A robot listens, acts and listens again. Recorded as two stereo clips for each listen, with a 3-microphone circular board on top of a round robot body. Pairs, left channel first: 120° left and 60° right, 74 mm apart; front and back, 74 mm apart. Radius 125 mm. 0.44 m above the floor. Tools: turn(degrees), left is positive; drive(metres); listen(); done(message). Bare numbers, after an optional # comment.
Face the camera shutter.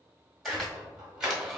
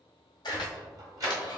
# The camera shutter: 30° left.
turn(30)
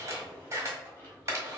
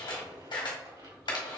done("Found it: a camera shutter, straight ahead.")